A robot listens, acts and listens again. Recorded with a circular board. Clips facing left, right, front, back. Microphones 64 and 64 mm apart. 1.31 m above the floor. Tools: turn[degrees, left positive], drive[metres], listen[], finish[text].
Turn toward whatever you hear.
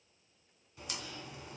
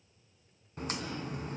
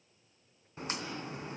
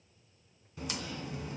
Thought: The crack: 50° right.
Action: turn[-50]
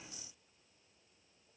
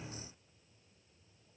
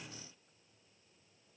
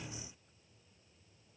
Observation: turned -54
Action: finish[Facing where the crack came from. I can't hear it now.]